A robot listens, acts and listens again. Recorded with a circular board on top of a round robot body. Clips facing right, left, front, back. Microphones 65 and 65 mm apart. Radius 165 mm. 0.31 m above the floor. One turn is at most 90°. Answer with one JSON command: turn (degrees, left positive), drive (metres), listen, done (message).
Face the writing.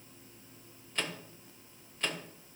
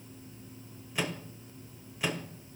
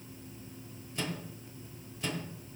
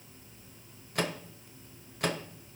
{"listen": true}
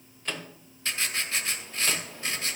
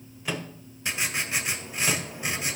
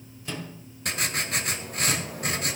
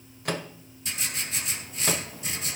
{"turn": 20}
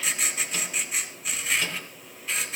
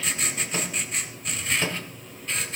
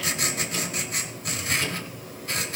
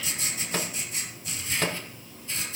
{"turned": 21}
{"done": "Found it: writing, straight ahead, 2 to 4 m away."}